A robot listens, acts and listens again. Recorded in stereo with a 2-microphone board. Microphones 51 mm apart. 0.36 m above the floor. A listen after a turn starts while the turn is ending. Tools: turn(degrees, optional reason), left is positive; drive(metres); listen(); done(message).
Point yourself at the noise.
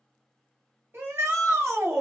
turn(degrees=-60, reason="The shout: about 60° right or 120° right.")
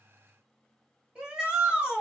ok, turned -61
turn(degrees=-20, reason="So it is at 20° right.")
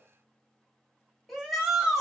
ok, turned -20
done("Facing the shout.")